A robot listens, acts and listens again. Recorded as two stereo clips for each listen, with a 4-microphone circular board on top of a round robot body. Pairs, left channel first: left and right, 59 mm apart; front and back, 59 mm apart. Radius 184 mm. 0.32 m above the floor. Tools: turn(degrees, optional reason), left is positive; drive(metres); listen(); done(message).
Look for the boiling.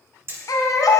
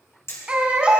listen()
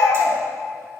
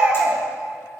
listen()
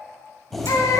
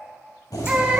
done("Facing the boiling.")